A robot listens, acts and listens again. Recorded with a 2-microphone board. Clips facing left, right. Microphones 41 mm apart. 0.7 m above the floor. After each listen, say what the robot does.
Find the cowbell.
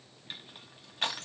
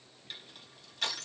Keep listening.
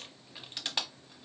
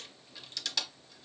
Keep listening.
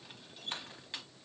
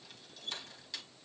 I can't make out a cowbell to turn to.